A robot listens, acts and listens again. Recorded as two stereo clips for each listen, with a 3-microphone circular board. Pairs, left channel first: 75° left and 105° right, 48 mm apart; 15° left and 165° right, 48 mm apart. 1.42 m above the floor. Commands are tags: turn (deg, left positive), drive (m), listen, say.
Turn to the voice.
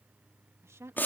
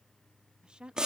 <turn deg="-95"/>
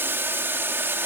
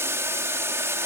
<listen/>
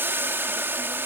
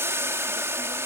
<listen/>
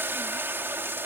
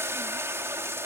<say>I heard a woman speaking from this way, but can't make it out now.</say>